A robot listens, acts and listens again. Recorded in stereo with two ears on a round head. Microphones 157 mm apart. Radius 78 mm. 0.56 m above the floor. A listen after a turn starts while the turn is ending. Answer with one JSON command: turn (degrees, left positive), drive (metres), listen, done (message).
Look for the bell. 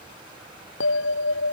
{"turn": 90}
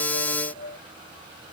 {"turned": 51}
{"turn": 45}
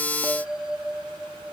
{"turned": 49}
{"done": "Found it: a bell, straight ahead."}